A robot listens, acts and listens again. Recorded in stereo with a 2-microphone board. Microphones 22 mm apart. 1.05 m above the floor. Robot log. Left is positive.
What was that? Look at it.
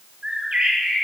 note: The bird: about 45° right or 135° right.
cmd yaw -45
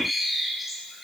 end: Found it: a bird, straight ahead, 2 to 4 m away.